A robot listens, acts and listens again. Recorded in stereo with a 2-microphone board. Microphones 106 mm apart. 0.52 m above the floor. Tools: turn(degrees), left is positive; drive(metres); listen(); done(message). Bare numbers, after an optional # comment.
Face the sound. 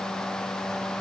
listen()
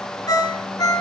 # The ringtone: about 35° left or 145° left.
turn(35)
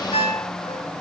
# So it is at 115° left.
turn(115)
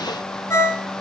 # The ringtone is now 25° left.
turn(25)
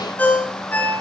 # The ringtone is now 15° left.
turn(15)
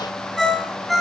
done("Facing the ringtone.")